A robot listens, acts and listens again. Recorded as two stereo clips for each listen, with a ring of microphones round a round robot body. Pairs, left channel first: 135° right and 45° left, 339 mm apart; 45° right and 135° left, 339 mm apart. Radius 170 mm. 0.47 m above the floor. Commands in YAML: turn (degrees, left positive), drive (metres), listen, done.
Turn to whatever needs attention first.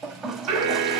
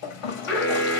done: "Found it: an alarm, straight ahead."